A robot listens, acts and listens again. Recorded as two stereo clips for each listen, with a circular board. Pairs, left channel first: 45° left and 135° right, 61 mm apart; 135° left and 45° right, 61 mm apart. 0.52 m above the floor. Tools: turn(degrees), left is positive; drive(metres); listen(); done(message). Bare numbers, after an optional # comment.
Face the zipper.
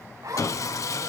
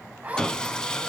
# The zipper: 110° right.
turn(-110)
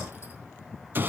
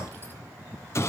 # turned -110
listen()
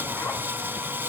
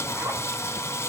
listen()
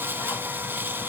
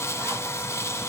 done("I heard a zipper from this way, but can't make it out now.")